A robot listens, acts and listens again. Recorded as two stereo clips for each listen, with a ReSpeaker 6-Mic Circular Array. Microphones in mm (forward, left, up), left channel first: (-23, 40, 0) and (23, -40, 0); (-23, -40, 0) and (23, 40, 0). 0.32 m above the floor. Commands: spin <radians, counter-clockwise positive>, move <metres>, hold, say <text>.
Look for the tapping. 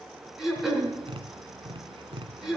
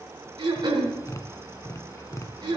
spin -1.13
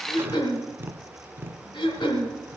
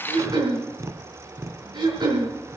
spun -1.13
say Found it: tapping, straight ahead.